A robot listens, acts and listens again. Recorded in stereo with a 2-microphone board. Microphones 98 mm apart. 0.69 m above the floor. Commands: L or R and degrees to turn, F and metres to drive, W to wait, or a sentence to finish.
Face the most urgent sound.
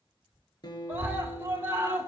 R25
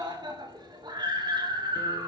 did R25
R125
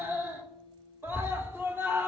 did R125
R25
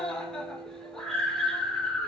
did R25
Facing the scream.